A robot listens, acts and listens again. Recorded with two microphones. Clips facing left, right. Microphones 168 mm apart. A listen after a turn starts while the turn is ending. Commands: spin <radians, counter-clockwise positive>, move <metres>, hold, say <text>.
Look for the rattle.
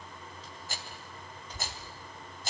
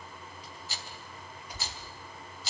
spin 0.87
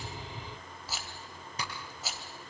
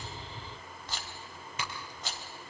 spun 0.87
say Facing the rattle, 2 to 4 m away.